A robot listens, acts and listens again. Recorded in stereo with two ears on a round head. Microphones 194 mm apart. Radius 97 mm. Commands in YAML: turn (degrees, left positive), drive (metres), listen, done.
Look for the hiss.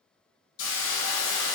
turn: 65
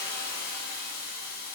turn: 45
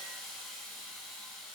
done: "Found it: a hiss, straight ahead."